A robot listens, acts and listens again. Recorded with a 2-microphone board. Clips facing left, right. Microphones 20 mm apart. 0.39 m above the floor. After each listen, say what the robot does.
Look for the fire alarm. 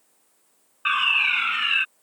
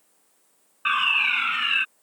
Turn 30° left.
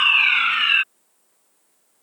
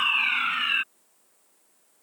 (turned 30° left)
Turn 140° left.
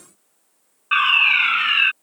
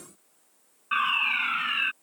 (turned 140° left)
Turn 50° left.
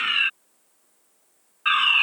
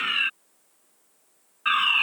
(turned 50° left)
Turn 10° left.
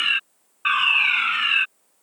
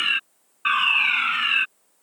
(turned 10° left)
Facing the fire alarm.